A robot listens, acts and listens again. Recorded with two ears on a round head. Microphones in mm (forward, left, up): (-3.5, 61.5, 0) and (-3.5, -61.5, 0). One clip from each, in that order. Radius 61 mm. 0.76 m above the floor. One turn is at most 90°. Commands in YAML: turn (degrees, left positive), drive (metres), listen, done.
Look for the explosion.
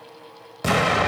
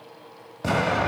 turn: 60
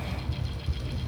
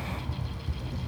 listen: true
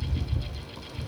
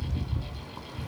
done: "I heard an explosion, but can't make it out now. It was about straight ahead or 60° left."